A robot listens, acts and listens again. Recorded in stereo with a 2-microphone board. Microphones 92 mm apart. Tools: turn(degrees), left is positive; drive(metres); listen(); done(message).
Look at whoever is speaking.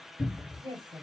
turn(degrees=-65)
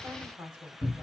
turn(degrees=-30)
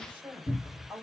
turn(degrees=-20)
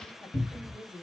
done("Facing the woman speaking.")